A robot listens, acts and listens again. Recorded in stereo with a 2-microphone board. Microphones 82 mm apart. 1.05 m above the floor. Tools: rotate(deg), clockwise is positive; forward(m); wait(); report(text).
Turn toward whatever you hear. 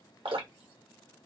rotate(90)
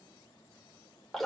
report("Facing the dripping, 1 to 2 m away.")